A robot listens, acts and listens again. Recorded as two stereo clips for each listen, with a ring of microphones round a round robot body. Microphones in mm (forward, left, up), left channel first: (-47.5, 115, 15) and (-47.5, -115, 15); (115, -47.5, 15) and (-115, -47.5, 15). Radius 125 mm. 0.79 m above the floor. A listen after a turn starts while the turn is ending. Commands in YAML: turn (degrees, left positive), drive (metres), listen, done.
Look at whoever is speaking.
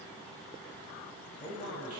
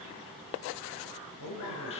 turn: 20
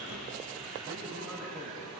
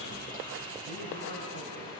listen: true
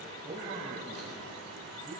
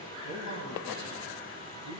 turn: -20
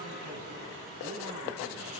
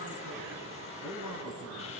done: "Facing the man speaking."